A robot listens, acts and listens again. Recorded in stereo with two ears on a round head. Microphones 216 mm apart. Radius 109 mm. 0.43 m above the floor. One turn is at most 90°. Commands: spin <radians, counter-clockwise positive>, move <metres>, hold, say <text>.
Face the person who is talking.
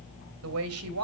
spin -1.13
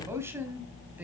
spin -0.17
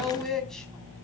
say Found it: a woman speaking, straight ahead, 2 to 4 m away.